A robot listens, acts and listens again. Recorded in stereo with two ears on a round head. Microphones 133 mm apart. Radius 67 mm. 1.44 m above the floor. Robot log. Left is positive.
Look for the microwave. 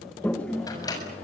note: The microwave: about 25° left or 155° left.
cmd yaw +25
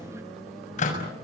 note: So it is at 130° left.
cmd yaw +130
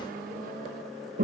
cmd idle
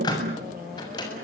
note: The microwave is now 25° left.
cmd yaw +25
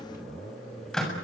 end: Facing the microwave, over 4 m away.